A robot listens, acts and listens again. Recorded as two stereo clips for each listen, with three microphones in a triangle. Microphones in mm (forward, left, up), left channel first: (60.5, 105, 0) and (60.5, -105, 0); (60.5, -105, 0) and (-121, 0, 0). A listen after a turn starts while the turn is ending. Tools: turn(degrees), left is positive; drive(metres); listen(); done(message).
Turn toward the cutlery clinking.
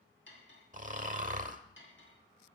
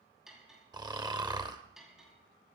turn(degrees=65)
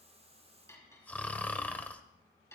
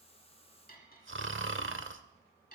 turn(degrees=15)
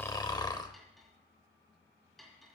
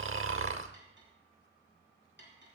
done("Found it: cutlery clinking, straight ahead.")